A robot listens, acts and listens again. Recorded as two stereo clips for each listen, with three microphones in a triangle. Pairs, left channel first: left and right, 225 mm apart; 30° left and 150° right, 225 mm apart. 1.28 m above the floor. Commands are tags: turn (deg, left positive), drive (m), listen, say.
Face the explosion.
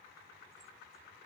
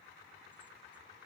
<listen/>
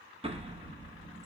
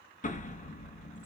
<turn deg="-30"/>
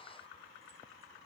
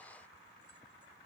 <say>I heard an explosion from this way, but can't make it out now.</say>